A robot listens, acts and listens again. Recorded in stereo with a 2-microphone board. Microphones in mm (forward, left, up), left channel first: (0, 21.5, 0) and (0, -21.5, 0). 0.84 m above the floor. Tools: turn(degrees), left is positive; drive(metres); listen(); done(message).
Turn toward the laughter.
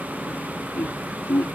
turn(degrees=60)
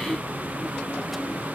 listen()
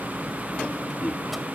done("Facing the laughter.")